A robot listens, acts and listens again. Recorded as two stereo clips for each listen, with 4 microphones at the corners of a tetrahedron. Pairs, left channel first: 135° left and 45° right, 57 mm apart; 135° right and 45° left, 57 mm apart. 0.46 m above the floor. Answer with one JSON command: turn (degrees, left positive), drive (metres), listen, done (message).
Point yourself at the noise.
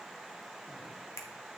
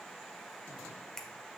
{"turn": 145}
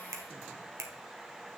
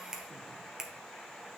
{"turn": -30}
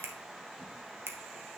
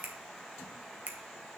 {"turn": -10}
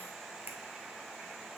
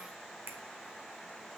{"done": "Facing the finger snap."}